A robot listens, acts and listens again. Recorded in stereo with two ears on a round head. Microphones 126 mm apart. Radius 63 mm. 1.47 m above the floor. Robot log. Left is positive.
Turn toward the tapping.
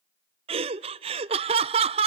cmd idle
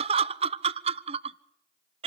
cmd idle
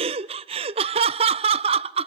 end: I can't make out tapping to turn to.